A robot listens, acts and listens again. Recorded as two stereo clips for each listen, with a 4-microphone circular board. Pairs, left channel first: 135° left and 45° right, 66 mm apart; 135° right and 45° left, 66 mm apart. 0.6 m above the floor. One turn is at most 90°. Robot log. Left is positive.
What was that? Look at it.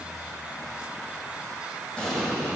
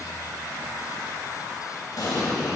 note: The explosion: 150° right.
cmd yaw -90
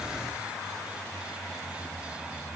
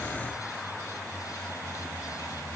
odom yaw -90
note: Nothing new. It was at 60° right.
cmd yaw -60
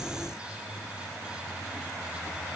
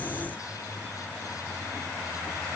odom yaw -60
end: Facing where the explosion came from. I can't hear it now.